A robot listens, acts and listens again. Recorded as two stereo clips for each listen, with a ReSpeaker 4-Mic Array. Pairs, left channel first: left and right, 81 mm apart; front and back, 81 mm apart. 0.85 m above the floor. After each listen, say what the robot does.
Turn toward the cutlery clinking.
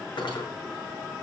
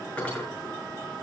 Turn 70° left.
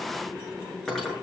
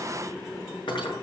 Found it: cutlery clinking, straight ahead.